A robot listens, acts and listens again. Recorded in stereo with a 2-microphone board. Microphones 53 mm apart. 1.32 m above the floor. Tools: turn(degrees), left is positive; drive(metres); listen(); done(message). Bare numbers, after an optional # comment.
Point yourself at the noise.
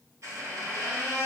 turn(-90)
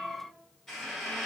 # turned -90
done("Facing the squeak, under 1 m away.")